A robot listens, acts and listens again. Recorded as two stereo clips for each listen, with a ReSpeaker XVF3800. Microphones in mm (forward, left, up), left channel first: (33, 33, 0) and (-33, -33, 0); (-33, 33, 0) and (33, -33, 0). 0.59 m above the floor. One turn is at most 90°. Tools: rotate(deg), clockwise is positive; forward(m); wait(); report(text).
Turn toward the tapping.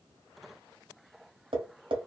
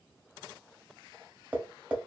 rotate(90)
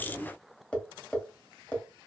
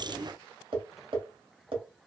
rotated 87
rotate(30)
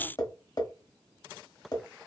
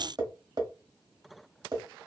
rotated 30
report("Facing the tapping.")